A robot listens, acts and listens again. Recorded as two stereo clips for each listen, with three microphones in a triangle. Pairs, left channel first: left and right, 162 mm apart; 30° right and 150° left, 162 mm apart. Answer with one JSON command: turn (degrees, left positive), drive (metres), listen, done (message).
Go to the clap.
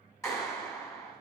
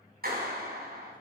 {"turn": 165}
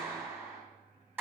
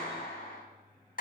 {"turn": -10}
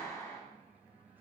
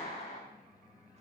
{"drive": 1.0}
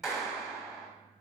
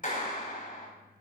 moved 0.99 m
{"drive": 1.0}
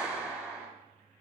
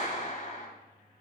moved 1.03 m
{"drive": 1.0}
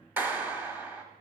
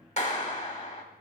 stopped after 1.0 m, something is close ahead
{"turn": -15}
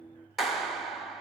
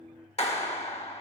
{"done": "Arrived at the clap, straight ahead."}